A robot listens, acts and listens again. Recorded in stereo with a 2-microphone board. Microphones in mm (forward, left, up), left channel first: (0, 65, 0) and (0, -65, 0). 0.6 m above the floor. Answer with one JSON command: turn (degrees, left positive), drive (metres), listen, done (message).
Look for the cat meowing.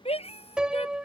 {"turn": 55}
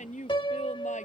{"listen": true}
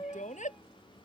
{"listen": true}
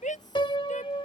{"done": "I heard a cat meowing, but can't make it out now. It was about straight ahead or 70° left."}